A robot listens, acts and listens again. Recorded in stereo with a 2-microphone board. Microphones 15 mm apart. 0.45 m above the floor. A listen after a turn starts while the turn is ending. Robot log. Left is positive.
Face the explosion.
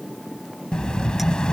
cmd yaw +90
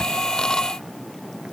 end: Facing where the explosion came from. I can't hear it now.